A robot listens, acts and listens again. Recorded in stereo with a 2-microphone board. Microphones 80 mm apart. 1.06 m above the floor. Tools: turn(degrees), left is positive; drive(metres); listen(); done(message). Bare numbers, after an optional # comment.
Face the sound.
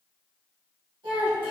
# The child speaking: about 75° right or 105° right.
turn(-75)
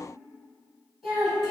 done("Found it: a child speaking, straight ahead.")